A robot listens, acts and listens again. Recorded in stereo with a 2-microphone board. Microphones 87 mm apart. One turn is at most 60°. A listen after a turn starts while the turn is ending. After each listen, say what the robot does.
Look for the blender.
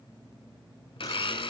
Turn 60° left.
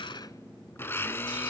Turn 25° left.
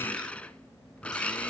Turn 15° left.
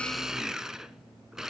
Found it: a blender, straight ahead.